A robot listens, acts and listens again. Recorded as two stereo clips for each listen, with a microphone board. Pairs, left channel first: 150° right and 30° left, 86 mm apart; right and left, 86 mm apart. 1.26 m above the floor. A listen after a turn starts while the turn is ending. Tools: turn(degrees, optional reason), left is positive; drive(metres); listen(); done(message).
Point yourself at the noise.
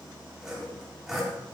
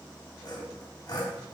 turn(degrees=-55, reason="The sawing: 55° right.")
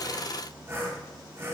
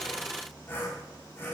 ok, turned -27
turn(degrees=-30, reason="The sawing is now 30° right.")
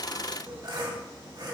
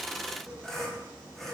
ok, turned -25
done("Found it: sawing, straight ahead, 2 to 4 m away.")